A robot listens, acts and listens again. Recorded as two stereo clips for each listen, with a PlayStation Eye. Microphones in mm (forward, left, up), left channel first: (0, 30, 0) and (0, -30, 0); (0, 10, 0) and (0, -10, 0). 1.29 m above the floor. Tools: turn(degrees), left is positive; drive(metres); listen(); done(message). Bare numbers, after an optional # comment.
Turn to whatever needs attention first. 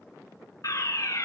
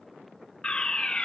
# The fire alarm: about 55° left or 125° left.
turn(55)
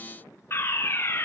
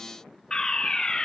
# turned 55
# So it is at 45° left.
turn(45)
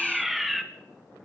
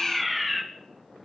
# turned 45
done("Facing the fire alarm.")